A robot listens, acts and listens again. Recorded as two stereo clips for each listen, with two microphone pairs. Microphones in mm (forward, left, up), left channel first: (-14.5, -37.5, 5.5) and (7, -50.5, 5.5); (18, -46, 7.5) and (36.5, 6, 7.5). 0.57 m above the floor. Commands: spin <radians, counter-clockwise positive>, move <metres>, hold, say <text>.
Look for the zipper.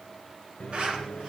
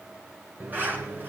spin 0.26
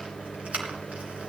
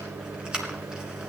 say Found it: a zipper, straight ahead, 2 to 4 m away.